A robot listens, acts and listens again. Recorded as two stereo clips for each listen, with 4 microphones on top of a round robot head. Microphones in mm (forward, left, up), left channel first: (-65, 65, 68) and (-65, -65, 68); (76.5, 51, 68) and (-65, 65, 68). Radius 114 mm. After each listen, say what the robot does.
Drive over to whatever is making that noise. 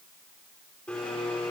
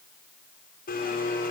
Drive 1.0 m forward.
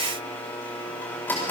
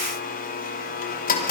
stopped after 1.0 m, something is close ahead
Turn 10° left.
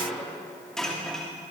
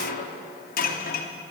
Something is in my way. I am facing the blender but have not reached it.